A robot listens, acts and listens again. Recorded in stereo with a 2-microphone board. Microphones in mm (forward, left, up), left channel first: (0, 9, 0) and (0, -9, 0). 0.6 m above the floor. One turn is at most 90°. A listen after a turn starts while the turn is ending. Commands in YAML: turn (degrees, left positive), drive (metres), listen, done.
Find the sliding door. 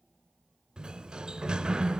turn: -55
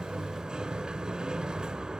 turn: -60
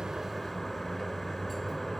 turn: 10
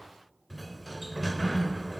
done: "Facing the sliding door, 2 to 4 m away."